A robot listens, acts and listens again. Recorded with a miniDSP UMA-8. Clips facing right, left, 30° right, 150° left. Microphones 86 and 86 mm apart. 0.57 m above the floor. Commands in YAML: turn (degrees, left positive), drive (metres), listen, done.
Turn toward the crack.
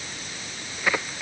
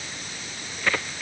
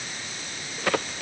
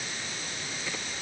turn: -10
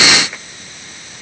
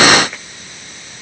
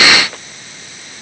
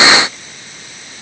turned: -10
done: "I heard a crack from this way, but can't make it out now."